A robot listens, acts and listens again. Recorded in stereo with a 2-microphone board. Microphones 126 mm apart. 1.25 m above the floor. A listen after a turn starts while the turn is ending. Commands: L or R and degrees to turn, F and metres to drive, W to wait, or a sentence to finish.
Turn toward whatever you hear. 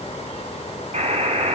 R60
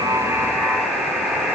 Facing the buzzer.